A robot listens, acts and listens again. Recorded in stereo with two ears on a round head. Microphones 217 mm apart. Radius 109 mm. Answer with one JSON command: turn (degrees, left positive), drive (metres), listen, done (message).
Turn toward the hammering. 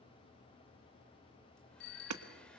{"turn": -90}
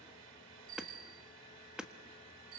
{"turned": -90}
{"done": "Facing the hammering, 1 to 2 m away."}